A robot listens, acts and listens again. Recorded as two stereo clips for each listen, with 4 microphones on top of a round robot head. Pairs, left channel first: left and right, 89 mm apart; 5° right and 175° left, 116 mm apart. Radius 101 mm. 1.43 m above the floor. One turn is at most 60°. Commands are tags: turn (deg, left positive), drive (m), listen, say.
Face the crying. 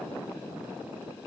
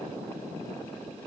<listen/>
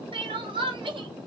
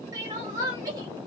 <turn deg="-60"/>
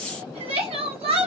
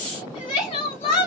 <turn deg="-55"/>
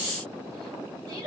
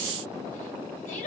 <turn deg="-30"/>
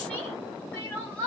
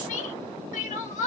<turn deg="10"/>
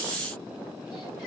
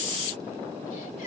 <listen/>
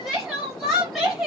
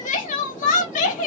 <say>Facing the crying, under 1 m away.</say>